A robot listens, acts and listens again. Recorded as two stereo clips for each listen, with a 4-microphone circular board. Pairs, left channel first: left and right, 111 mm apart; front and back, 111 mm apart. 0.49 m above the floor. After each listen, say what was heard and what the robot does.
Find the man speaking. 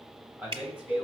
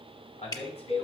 The man speaking: 10° right. Turn 10° right.
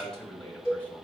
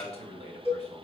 The man speaking is now 10° left. Turn 10° left.
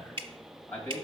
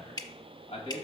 The man speaking is now 20° left. Turn 20° left.
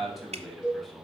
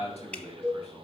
Found it: a man speaking, straight ahead.